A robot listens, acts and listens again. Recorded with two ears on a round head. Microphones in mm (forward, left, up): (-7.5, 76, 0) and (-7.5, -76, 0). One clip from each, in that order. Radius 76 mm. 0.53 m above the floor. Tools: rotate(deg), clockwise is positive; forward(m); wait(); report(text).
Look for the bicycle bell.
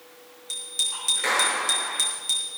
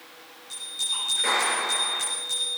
rotate(-60)
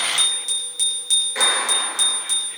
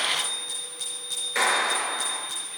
rotate(-60)
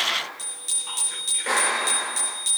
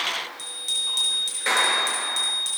report("Facing the bicycle bell.")